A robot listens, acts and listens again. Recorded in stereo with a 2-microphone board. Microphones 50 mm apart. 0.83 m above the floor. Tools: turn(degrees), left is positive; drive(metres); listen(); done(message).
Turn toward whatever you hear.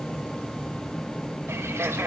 turn(degrees=-65)
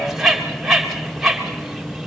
done("Found it: a bird, straight ahead, 2 to 4 m away.")